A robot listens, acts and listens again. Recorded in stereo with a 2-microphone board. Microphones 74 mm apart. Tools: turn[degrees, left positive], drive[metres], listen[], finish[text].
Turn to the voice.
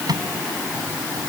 Action: listen[]
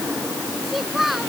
Action: turn[30]
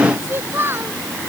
Thought: So it is at 35° right.
Action: turn[-35]
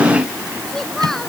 Action: finish[Found it: a child speaking, straight ahead.]